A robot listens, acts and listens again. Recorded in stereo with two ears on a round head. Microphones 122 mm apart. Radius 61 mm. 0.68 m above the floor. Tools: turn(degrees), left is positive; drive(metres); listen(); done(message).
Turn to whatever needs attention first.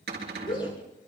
turn(degrees=35)
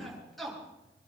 done("Found it: a shout, straight ahead.")